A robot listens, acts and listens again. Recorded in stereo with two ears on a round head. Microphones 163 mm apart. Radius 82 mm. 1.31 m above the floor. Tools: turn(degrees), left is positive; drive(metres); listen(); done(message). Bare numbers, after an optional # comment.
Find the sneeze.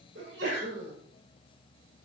# The sneeze: about 65° right or 115° right.
turn(-65)
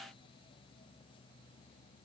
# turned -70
listen()
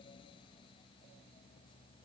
done("I heard a sneeze, but can't make it out now. It was about 5° left or 45° right.")